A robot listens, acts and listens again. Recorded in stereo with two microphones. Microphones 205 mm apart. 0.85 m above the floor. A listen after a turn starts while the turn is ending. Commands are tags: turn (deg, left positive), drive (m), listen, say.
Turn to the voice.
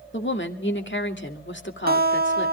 <turn deg="65"/>
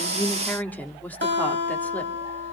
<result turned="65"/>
<turn deg="10"/>
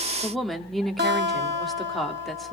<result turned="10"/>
<say>Found it: a woman speaking, straight ahead, 2 to 4 m away.</say>